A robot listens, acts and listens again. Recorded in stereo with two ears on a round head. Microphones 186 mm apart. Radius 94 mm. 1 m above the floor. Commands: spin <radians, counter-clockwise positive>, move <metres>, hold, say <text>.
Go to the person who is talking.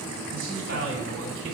spin -1.05
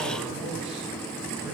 hold
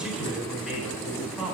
move 1.0
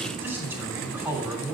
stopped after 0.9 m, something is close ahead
say Something is in my way. I am facing the man speaking but have not reached it.